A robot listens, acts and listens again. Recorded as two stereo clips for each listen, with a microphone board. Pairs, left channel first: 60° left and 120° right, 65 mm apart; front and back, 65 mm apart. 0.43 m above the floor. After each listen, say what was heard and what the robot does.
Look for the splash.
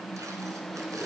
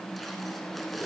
Keep listening.
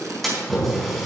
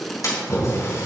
The splash: 30° right. Turn 30° right.
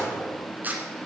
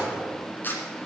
Facing where the splash came from. I can't hear it now.